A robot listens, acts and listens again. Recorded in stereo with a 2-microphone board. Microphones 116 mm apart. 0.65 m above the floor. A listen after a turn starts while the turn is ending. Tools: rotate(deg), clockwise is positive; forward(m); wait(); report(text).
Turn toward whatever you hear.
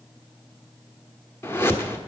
rotate(-20)
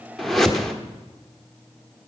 report("Found it: a whoosh, straight ahead.")